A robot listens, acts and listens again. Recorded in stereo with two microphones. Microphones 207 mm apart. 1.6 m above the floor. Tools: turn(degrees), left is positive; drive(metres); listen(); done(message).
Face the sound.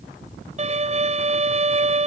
turn(degrees=-35)
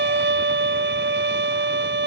turn(degrees=-110)
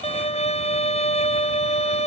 turn(degrees=35)
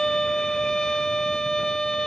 done("Found it: a violin, straight ahead.")